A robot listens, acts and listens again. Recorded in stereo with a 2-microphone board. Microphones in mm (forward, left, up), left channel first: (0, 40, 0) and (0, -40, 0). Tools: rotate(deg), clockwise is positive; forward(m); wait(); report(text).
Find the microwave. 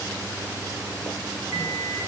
rotate(65)
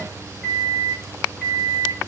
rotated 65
rotate(10)
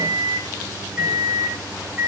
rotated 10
report("Facing the microwave, over 4 m away.")